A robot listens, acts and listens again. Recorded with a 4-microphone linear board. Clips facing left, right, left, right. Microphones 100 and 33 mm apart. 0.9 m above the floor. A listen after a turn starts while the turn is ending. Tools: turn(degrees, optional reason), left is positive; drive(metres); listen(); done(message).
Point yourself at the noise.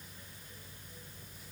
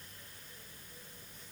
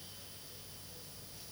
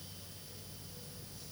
listen()
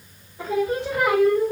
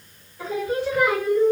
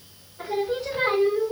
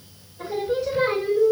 turn(degrees=65, reason="The singing: about 65° left or 115° left.")
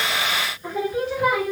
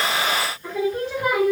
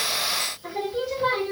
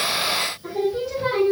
done("Facing the singing.")